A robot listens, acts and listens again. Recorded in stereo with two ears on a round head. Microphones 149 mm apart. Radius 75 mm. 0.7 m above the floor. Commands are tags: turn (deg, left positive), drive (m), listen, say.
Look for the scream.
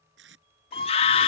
<turn deg="40"/>
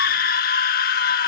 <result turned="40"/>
<turn deg="95"/>
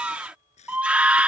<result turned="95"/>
<turn deg="-10"/>
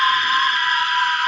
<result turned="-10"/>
<say>Found it: a scream, straight ahead.</say>